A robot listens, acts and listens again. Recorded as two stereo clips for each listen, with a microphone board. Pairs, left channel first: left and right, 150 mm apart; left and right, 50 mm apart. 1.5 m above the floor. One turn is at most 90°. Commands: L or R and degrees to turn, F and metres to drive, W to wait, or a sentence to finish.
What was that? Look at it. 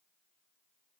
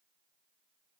W
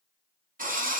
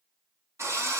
R65
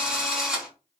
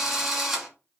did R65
Found it: a drill, straight ahead.